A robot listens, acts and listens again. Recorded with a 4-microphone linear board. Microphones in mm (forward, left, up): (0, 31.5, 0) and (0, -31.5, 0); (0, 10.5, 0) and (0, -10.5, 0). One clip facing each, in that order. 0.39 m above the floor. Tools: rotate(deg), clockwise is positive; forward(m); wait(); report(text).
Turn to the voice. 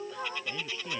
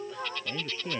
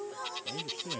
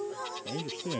rotate(20)
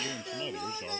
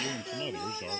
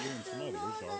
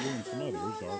report("Found it: a man speaking, straight ahead.")